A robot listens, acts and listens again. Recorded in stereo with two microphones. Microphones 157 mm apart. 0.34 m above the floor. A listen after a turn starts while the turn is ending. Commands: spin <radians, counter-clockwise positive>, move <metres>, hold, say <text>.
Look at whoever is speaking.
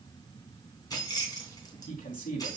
spin 1.13
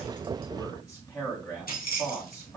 spin 0.44
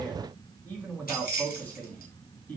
spin 0.17
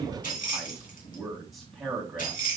say Facing the man speaking, 2 to 4 m away.